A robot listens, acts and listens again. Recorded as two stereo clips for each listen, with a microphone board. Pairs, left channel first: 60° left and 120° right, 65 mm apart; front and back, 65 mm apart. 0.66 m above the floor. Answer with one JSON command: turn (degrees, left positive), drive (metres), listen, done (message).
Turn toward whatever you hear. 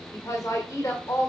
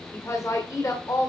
{"turn": 25}
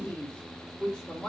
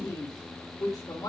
{"turn": -20}
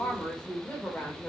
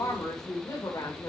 {"turn": -15}
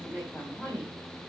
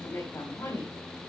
{"done": "Found it: a woman speaking, straight ahead, 2 to 4 m away."}